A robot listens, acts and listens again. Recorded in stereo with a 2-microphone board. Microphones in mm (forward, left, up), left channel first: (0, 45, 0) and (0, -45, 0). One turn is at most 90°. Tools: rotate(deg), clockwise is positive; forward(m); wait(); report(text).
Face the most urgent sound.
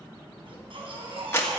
rotate(90)
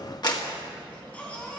rotate(-15)
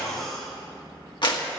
report("Found it: a baby crying, straight ahead.")